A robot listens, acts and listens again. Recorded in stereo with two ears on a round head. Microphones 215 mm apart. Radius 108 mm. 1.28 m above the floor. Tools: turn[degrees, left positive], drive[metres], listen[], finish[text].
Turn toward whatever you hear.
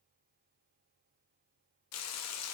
Thought: The frying: about 65° left or 115° left.
Action: turn[65]
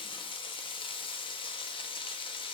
Thought: So it is at 20° left.
Action: turn[20]
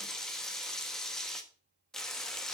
Action: finish[Facing the frying, 1 to 2 m away.]